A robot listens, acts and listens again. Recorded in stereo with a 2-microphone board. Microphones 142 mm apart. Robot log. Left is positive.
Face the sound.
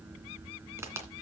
note: The crack: about 20° right or 160° right.
cmd yaw -20
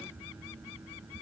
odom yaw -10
cmd idle
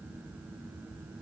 end: I heard a crack, but can't make it out now. It was about 10° right or 150° right.